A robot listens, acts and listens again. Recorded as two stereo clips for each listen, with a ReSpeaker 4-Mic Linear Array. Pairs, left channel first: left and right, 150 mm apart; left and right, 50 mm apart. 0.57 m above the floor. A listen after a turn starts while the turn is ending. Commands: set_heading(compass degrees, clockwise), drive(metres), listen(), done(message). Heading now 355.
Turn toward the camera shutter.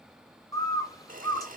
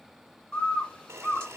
set_heading(55)
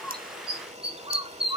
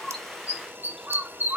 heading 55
set_heading(110)
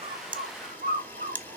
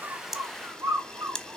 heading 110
set_heading(100)
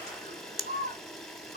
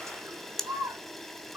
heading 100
done("Facing the camera shutter.")